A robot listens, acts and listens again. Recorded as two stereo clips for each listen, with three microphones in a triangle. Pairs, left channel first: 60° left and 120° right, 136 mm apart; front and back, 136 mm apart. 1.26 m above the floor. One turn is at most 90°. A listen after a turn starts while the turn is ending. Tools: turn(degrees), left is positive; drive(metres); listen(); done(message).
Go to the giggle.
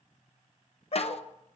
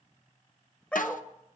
listen()
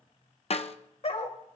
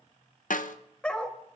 listen()
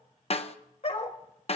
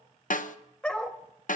done("I can't make out a giggle to turn to.")